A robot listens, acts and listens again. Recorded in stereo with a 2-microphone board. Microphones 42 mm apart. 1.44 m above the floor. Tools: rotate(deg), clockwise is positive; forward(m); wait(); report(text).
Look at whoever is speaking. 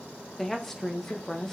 rotate(-30)
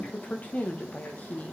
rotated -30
rotate(-145)
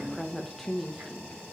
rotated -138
report("Found it: a woman speaking, straight ahead.")